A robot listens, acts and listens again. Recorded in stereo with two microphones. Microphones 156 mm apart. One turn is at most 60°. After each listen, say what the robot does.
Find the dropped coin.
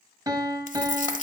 Turn 55° left.
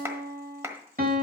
Keep listening.
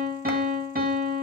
I heard a dropped coin, but can't make it out now. It was about straight ahead or 70° left.